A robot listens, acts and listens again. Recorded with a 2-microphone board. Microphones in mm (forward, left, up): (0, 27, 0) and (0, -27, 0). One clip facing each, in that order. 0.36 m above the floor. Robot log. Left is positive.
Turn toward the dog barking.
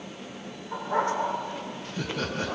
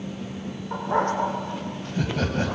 note: The dog barking: about 50° right or 130° right.
cmd yaw -50
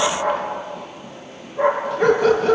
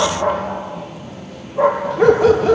note: So it is at 90° right.
cmd yaw -90
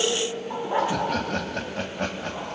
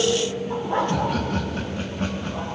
note: The dog barking is now 10° left.
cmd yaw +10
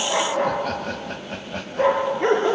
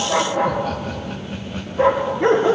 end: Facing the dog barking.